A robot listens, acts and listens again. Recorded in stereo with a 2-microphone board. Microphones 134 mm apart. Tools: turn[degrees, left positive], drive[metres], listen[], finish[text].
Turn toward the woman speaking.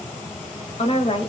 Thought: The woman speaking: about 40° left or 140° left.
Action: turn[40]
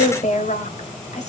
Thought: So it is at 125° left.
Action: turn[125]
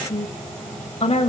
Thought: The woman speaking is now 45° left.
Action: turn[45]
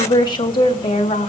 Thought: The woman speaking is now 40° left.
Action: turn[40]
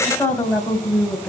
Thought: The woman speaking is now 10° left.
Action: turn[10]
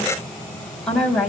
Action: finish[Facing the woman speaking.]